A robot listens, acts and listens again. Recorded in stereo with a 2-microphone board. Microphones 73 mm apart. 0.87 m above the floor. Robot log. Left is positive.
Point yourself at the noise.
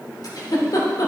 note: The giggle: about 55° left or 125° left.
cmd yaw +55
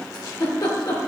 note: So it is at 65° left.
cmd yaw +65
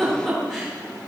end: Facing the giggle.